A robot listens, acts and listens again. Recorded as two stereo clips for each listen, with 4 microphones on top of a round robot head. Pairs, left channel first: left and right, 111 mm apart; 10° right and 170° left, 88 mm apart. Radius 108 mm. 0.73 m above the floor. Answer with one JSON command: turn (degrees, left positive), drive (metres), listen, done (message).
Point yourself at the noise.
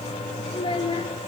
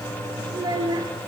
{"turn": 130}
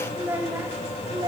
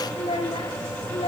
{"turn": -35}
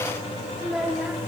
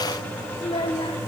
{"turn": -10}
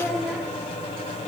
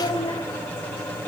{"turn": -10}
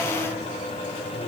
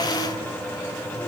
{"listen": true}
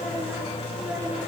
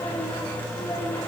{"listen": true}
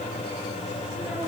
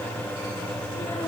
{"done": "Facing where the child speaking came from. I can't hear it now."}